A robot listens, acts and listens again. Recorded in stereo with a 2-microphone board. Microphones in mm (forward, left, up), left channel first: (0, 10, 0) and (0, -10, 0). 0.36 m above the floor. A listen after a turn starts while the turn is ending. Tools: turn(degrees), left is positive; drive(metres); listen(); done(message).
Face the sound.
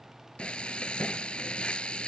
turn(degrees=65)
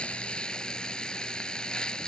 turn(degrees=50)
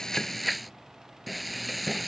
done("Found it: frying, straight ahead.")